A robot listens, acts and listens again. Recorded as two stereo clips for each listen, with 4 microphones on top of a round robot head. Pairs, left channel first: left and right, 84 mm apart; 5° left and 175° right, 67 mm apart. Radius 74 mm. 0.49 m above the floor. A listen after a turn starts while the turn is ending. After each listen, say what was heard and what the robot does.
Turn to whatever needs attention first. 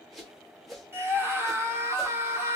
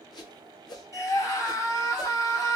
The scream: 35° right. Turn 35° right.
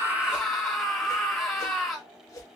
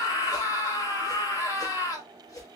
Found it: a scream, straight ahead.